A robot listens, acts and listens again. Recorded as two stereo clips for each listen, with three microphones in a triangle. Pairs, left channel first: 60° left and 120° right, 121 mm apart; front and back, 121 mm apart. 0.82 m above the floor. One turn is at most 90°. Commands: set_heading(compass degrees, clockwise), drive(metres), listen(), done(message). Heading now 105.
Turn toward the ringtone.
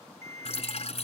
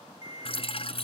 set_heading(15)
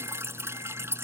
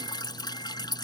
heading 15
set_heading(340)
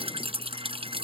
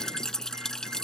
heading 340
listen()
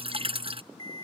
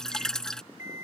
done("Facing the ringtone.")